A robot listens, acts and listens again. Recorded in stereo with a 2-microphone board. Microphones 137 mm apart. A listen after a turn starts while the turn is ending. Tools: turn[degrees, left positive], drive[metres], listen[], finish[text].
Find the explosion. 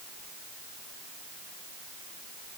Action: listen[]
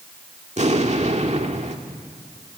Thought: The explosion: about 55° right or 125° right.
Action: turn[-55]
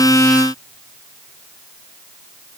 Action: listen[]
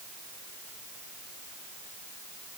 Action: finish[I heard an explosion, but can't make it out now. It was about straight ahead or 70° right.]